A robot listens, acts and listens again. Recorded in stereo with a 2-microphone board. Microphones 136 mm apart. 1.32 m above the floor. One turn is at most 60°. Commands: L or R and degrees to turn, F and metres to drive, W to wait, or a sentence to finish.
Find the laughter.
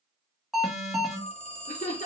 L60
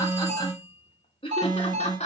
L55
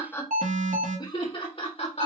L50
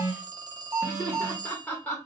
L10
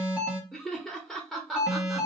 Facing the laughter.